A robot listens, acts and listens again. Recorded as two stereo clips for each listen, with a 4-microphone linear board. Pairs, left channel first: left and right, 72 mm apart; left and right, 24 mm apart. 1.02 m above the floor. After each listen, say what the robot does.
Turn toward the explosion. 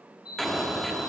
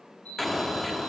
Turn 30° left.
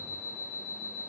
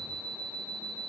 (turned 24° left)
Keep listening.
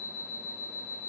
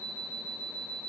I heard an explosion, but can't make it out now. It was about 25° right or 155° left.